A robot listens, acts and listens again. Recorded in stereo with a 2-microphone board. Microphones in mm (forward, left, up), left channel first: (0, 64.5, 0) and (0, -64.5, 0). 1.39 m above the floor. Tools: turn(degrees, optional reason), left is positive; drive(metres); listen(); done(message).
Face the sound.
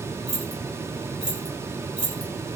turn(degrees=70, reason="The keys jangling: about 70° left or 110° left.")
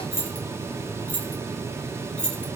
done("Found it: keys jangling, straight ahead, 2 to 4 m away.")